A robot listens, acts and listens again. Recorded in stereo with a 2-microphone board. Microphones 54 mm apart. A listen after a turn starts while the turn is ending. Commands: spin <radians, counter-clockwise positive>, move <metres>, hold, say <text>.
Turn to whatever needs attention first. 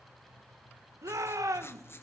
spin -1.57
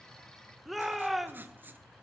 say Facing the shout, 1 to 2 m away.